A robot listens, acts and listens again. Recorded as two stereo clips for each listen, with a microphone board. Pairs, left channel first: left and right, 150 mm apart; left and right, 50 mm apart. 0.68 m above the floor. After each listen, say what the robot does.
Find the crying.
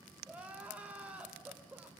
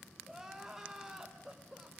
Turn 30° right.
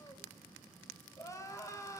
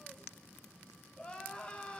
Turn 20° left.
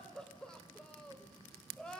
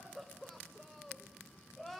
Found it: crying, straight ahead, 2 to 4 m away.